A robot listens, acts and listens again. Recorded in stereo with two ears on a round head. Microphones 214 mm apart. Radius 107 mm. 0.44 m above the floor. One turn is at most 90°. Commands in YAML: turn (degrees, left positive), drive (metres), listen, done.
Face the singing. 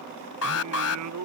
turn: -90
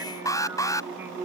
turn: -10
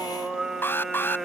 done: "Facing the singing."